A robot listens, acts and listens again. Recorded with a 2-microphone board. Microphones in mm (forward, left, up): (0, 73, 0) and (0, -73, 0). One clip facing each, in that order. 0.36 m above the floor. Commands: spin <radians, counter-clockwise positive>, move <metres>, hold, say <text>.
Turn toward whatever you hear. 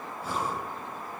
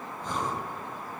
spin 0.52
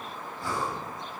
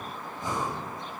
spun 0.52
spin -0.35
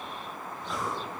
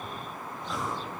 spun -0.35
say Found it: breathing, straight ahead.